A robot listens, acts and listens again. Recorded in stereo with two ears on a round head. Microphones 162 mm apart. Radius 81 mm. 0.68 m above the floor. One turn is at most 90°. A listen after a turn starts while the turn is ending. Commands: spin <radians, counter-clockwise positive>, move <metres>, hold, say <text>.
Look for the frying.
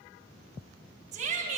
hold
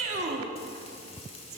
spin 0.52
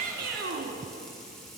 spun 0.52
say Found it: frying, straight ahead.